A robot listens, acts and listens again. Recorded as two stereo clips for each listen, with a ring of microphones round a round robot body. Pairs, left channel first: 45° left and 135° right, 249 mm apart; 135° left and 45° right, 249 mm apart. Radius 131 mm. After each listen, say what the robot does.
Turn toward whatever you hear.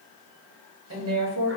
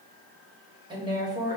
Turn 120° right.
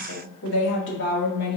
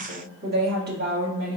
Found it: a woman speaking, straight ahead, 2 to 4 m away.